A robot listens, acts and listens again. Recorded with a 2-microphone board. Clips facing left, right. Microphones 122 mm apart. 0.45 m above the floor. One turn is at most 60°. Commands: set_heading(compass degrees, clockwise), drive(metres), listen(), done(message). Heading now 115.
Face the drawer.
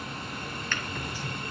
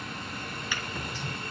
set_heading(145)
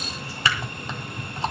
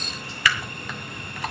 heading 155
set_heading(125)
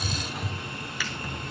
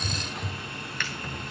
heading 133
done("Facing the drawer, 2 to 4 m away.")